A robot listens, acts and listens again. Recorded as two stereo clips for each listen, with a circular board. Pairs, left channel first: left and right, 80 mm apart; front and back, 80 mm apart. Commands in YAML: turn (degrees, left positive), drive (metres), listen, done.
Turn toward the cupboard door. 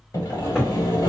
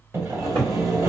turn: 180
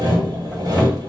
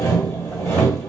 listen: true
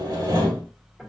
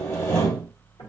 listen: true
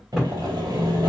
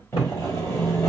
done: "Facing the cupboard door, 2 to 4 m away."